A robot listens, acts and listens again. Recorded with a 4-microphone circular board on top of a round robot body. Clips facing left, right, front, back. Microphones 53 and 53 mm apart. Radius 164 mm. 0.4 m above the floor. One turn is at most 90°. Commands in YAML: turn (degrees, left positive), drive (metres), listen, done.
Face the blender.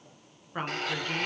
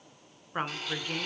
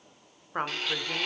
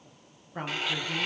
turn: 90
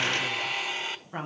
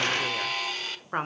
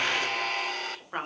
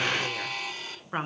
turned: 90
turn: 20
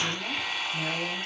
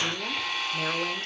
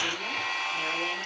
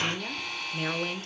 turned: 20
turn: 10
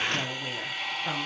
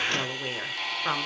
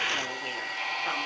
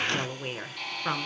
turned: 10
done: "Found it: a blender, straight ahead."